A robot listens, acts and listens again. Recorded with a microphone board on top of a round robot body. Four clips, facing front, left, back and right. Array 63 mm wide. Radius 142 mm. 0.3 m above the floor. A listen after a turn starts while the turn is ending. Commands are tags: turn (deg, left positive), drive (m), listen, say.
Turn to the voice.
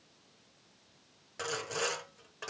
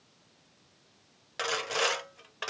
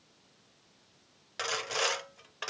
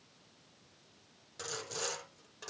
<listen/>
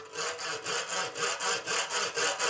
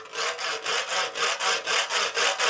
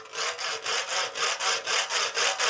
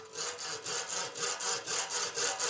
<listen/>
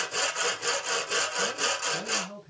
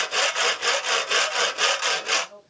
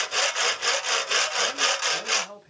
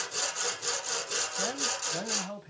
<turn deg="-120"/>
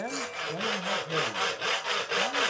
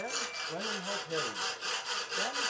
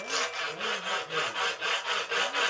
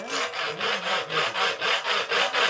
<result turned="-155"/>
<turn deg="35"/>
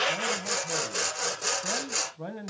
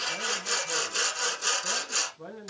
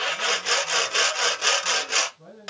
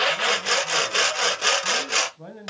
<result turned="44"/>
<turn deg="-10"/>
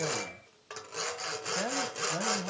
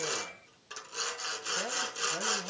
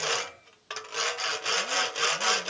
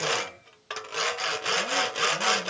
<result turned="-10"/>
<listen/>
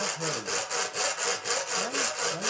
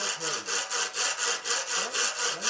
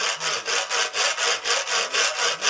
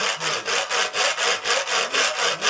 <listen/>
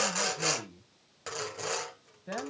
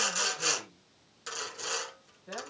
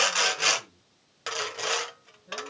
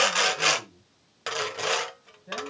<say>Facing the man speaking, 2 to 4 m away.</say>